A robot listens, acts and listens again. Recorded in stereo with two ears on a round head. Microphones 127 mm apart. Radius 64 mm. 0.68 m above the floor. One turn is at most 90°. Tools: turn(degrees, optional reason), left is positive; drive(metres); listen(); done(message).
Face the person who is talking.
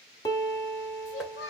turn(degrees=90)
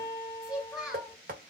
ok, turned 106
done("Facing the child speaking.")